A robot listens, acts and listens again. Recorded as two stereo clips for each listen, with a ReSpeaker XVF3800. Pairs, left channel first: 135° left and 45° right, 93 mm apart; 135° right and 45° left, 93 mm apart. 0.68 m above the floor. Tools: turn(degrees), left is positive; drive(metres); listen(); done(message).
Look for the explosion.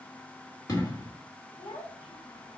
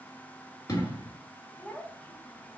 turn(degrees=-175)
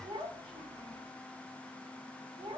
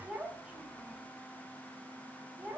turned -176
done("I heard an explosion from this way, but can't make it out now.")